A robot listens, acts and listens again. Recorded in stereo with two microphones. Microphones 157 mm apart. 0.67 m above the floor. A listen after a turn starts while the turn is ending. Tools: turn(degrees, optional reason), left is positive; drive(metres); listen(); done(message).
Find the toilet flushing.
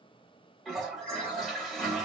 turn(degrees=30)
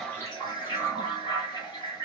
turn(degrees=150, reason="So it is at 150° left.")
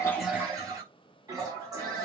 turn(degrees=-25, reason="The toilet flushing is now 25° right.")
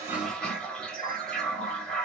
done("Found it: a toilet flushing, straight ahead.")